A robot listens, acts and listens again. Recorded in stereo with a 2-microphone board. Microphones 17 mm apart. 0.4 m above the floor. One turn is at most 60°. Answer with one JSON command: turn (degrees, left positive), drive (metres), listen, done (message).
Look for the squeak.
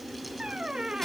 {"turn": -35}
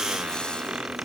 {"turn": -60}
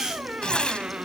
{"turn": -60}
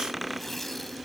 {"turn": -10}
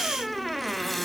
{"done": "Found it: a squeak, straight ahead."}